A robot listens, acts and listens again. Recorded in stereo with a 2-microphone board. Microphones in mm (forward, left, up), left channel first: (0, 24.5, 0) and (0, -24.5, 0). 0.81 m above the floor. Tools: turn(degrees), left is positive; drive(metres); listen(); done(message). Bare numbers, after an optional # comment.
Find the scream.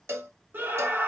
# The scream: about 40° right or 140° right.
turn(-40)
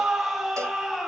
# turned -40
done("Facing the scream, 1 to 2 m away.")